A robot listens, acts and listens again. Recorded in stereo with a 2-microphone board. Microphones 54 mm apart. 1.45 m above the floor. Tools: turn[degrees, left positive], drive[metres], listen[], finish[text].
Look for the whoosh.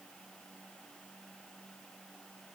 Action: listen[]
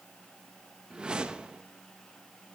Thought: The whoosh: about 15° right or 165° right.
Action: turn[-15]
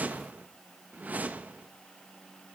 Thought: So it is at 150° right.
Action: turn[-150]
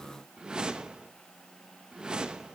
Thought: The whoosh is now 20° right.
Action: turn[-20]
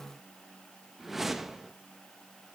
Action: finish[Facing the whoosh.]